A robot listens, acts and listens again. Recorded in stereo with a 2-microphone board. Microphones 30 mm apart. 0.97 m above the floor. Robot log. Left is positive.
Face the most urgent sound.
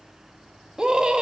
note: The scream: about 25° right or 155° right.
cmd yaw -25
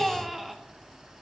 end: Facing the scream, 1 to 2 m away.